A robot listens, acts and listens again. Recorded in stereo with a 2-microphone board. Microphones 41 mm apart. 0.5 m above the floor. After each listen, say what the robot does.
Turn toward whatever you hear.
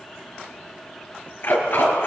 Turn 60° left.
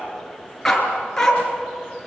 Turn 15° left.
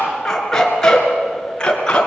Turn 25° left.
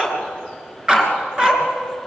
Turn 15° right.
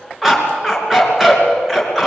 Found it: a dog barking, straight ahead.